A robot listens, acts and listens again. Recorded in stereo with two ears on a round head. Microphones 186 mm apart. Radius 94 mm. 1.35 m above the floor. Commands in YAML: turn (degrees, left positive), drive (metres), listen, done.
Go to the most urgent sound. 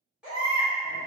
turn: -30
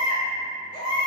turn: 25
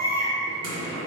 turn: -15
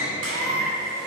drive: 1.0
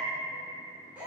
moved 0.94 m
turn: -10
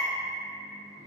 drive: 1.0
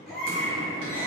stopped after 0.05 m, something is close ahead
done: "Arrived at the baby crying, straight ahead."